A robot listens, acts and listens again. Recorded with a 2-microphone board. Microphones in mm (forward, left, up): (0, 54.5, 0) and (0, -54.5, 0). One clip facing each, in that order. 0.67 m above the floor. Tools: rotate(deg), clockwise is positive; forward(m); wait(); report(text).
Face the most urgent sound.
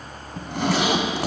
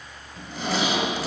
wait()
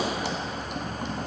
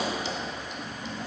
wait()
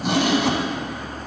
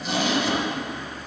report("I can't make out anything urgent to turn to.")